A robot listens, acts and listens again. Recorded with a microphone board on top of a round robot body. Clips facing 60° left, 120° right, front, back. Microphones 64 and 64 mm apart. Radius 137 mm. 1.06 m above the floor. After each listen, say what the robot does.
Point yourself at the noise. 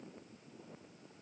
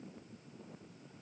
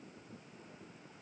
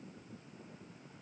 Keep listening.
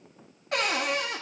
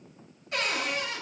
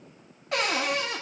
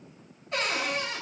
Turn 20° left.
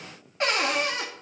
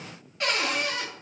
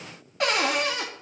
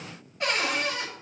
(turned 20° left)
Found it: a cupboard door, straight ahead.